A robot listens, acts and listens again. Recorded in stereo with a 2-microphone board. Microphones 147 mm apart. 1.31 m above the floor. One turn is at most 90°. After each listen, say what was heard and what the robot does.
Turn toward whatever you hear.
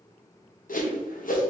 The whoosh: about 65° left or 115° left. Turn 65° left.
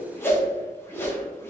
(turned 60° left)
So it is at 15° left. Turn 15° left.
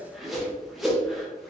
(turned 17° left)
Facing the whoosh.